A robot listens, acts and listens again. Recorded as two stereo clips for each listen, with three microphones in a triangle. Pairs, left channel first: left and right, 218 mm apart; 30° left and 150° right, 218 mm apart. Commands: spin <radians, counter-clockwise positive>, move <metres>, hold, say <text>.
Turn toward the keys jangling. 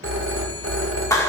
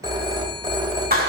hold
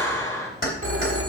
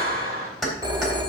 spin 2.09
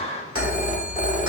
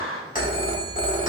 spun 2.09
hold
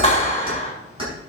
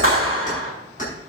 spin -0.44
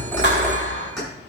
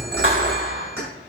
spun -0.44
say Found it: keys jangling, straight ahead.